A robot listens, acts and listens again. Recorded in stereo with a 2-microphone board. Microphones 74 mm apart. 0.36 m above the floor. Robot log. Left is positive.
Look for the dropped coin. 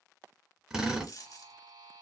note: The dropped coin: about 50° left or 130° left.
cmd yaw +50
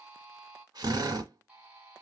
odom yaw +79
cmd idle
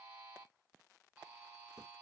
end: I heard a dropped coin, but can't make it out now. It was about 30° right or 50° left.